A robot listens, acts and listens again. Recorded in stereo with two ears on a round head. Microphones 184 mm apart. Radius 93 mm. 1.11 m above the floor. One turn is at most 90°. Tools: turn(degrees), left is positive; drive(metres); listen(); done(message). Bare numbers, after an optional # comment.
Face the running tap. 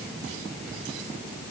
listen()
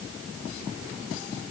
listen()
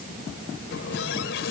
# The running tap: about 65° left or 115° left.
turn(65)
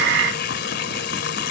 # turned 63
# So it is at 50° left.
turn(50)
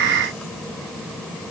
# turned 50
listen()
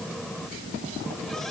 done("Facing the running tap.")